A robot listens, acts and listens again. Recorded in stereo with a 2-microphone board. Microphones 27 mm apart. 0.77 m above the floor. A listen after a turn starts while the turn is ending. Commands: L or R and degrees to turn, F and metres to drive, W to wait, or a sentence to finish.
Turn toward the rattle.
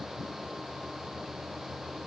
W
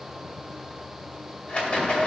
L50
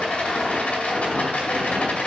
L75
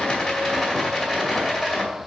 Facing the rattle, 2 to 4 m away.